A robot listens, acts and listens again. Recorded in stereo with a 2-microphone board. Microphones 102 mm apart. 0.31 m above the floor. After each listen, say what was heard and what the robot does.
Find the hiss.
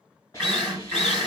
The hiss: about 35° left or 145° left. Turn 35° left.
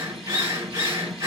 Keep listening.
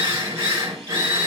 Keep listening.
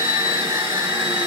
I heard a hiss, but can't make it out now. It was about straight ahead or 110° left.